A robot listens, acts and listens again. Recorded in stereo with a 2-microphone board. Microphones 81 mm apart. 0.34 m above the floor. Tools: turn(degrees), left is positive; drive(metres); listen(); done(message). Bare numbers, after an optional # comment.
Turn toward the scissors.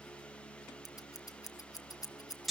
# The scissors: about 50° left or 130° left.
turn(50)
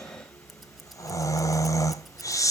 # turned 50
listen()
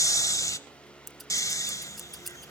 done("Found it: scissors, straight ahead, under 1 m away.")